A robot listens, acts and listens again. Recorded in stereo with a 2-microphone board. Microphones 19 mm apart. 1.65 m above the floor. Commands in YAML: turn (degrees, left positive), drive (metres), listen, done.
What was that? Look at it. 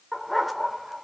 turn: 30
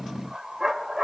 turn: -25
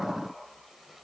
listen: true
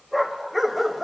done: "Found it: a dog barking, straight ahead."